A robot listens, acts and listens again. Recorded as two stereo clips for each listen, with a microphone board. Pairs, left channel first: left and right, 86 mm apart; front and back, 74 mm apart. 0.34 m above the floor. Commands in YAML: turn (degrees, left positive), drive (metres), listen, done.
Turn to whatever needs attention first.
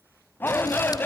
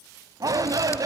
turn: 155
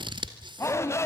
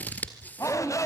turn: 35
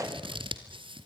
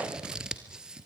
listen: true
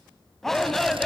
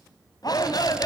done: "Found it: a shout, straight ahead, 2 to 4 m away."